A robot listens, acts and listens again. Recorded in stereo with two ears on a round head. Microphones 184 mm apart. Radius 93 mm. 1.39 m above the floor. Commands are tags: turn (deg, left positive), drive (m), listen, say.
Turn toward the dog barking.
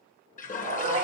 <turn deg="-25"/>
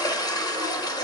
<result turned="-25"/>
<listen/>
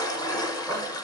<say>Facing the dog barking, 2 to 4 m away.</say>